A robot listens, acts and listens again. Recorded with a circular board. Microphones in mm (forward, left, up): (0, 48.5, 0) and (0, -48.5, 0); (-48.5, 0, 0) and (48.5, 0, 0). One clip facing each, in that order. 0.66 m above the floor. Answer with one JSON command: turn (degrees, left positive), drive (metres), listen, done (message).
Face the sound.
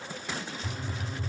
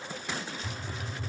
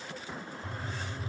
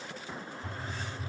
{"turn": 65}
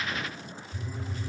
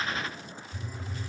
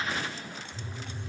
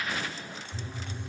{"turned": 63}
{"done": "Facing the phone buzzing, under 1 m away."}